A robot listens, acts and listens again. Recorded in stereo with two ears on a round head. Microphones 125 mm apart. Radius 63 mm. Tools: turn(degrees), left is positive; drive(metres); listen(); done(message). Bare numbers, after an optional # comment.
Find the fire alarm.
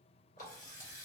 listen()
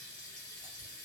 listen()
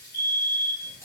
# The fire alarm: about 55° left or 125° left.
turn(55)
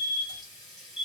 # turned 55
# So it is at 50° left.
turn(50)
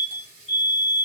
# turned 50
done("Found it: a fire alarm, straight ahead.")